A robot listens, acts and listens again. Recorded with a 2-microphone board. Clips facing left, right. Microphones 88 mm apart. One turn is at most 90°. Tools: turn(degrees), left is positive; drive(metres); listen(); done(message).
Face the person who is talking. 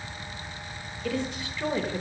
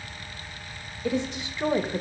turn(degrees=-20)
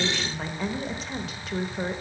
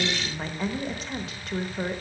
done("Facing the woman speaking, 1 to 2 m away.")